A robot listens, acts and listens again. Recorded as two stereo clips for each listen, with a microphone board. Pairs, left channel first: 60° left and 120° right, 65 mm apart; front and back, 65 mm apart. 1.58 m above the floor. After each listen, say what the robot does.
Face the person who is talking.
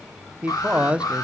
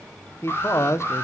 Turn 50° right.
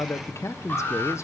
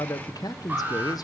Turn 15° left.
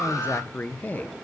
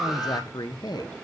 Facing the man speaking, 1 to 2 m away.